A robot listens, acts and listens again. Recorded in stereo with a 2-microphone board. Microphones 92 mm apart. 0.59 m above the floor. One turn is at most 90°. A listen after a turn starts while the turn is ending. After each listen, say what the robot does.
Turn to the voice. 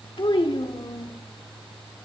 Turn 60° left.
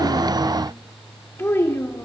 Turn 30° left.
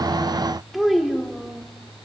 Facing the child speaking, 1 to 2 m away.